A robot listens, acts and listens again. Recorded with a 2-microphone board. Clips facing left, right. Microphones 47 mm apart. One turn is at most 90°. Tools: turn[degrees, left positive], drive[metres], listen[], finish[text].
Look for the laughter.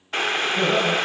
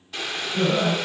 Action: turn[30]
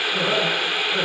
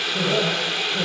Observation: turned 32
Thought: So it is at 140° left.
Action: turn[90]
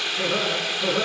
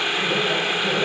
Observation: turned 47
Thought: The laughter is now 95° left.
Action: turn[90]
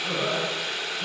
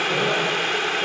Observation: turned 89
Action: listen[]
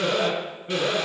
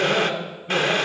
Action: finish[Facing the laughter, over 4 m away.]